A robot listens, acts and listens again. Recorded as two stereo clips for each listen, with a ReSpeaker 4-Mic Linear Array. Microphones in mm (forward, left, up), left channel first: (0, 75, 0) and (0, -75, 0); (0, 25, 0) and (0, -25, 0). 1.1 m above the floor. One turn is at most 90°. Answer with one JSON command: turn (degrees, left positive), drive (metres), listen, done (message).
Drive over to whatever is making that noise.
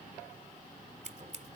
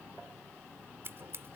{"turn": -55}
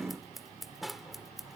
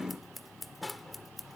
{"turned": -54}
{"drive": 1.0}
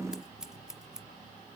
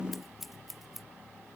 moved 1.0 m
{"drive": 1.0}
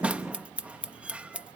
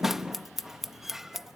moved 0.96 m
{"turn": -10}
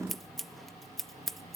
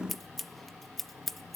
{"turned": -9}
{"drive": 1.0}
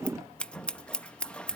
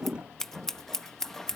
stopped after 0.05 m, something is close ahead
{"done": "Arrived at the scissors, straight ahead."}